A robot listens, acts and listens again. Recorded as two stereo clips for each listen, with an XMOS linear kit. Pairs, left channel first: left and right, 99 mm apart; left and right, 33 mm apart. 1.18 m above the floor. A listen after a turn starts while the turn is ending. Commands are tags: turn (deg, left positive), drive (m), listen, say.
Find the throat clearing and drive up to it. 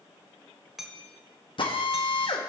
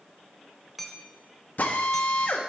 <listen/>
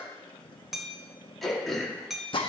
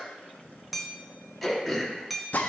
<turn deg="30"/>
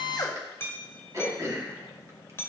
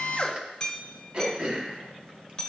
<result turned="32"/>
<turn deg="-30"/>
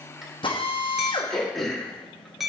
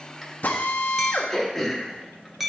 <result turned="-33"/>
<drive m="1.0"/>
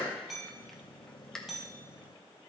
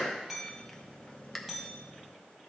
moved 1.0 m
<drive m="1.0"/>
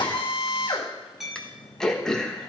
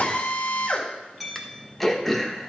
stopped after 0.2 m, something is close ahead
<say>Arrived at the throat clearing, straight ahead.</say>